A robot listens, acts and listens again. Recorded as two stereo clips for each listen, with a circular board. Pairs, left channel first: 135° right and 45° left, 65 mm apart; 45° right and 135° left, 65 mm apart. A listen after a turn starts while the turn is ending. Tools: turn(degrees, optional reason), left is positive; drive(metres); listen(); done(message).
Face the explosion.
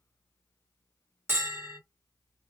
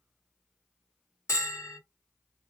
listen()
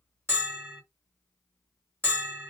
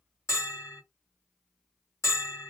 listen()
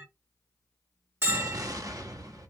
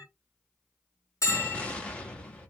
turn(degrees=25, reason="The explosion: 25° left.")
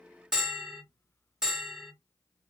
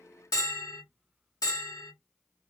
done("Facing where the explosion came from. I can't hear it now.")